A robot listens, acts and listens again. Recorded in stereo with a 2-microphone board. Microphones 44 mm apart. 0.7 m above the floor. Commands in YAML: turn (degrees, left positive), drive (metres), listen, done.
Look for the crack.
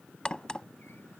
turn: 20
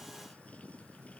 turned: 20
listen: true
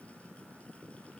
done: "I heard a crack, but can't make it out now. It was about straight ahead or 140° left."